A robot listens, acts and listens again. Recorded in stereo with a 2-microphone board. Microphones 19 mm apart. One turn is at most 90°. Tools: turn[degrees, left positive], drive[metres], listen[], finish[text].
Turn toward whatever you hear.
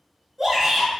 Action: turn[-30]
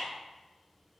Action: listen[]
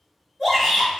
Thought: So it is at 20° left.
Action: turn[20]
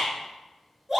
Action: finish[Found it: a shout, straight ahead.]